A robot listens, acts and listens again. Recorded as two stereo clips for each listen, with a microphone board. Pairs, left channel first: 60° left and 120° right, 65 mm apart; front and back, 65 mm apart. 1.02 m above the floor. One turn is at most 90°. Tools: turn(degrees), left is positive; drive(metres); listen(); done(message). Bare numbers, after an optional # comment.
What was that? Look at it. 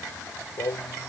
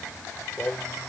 # The singing: 65° left.
turn(65)
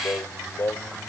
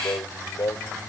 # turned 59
done("Found it: singing, straight ahead.")